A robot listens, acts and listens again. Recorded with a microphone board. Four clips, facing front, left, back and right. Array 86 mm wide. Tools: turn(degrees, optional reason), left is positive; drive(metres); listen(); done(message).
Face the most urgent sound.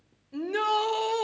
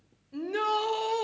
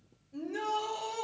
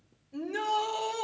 turn(degrees=20, reason="The shout: 20° left.")
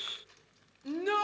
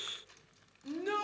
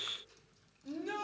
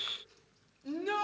done("Facing the shout, 1 to 2 m away.")